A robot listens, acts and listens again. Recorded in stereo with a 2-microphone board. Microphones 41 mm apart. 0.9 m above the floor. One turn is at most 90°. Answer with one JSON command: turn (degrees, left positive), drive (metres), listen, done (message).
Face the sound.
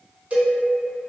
{"turn": -35}
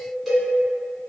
{"turn": -10}
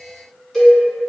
{"done": "Facing the cowbell."}